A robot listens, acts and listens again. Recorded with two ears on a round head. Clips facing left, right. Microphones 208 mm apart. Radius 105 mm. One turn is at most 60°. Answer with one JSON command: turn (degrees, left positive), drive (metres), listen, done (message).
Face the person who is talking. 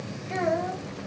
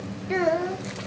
{"turn": -60}
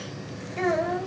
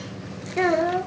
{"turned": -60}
{"turn": -55}
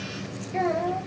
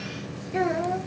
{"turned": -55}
{"turn": -10}
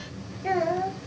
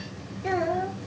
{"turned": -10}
{"done": "Facing the child speaking."}